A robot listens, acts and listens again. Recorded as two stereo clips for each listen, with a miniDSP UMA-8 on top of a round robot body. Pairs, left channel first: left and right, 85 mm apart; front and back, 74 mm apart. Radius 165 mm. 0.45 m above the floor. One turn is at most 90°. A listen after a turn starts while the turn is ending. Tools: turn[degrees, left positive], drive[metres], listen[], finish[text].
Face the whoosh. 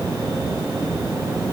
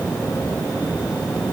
Action: listen[]
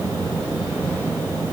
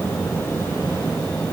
Action: listen[]
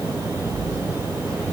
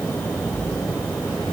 Action: finish[I can't make out a whoosh to turn to.]